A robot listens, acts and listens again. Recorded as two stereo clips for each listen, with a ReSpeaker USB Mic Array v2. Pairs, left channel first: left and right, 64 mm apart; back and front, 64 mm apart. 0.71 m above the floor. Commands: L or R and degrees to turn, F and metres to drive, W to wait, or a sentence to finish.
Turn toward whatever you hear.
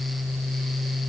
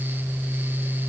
W
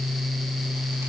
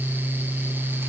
W
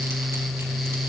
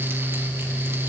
I can't make out anything to turn to.